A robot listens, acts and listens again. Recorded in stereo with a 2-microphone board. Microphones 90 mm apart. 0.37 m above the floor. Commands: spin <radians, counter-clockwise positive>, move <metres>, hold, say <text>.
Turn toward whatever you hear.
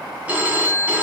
spin -0.26
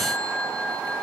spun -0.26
say Facing the phone ringing.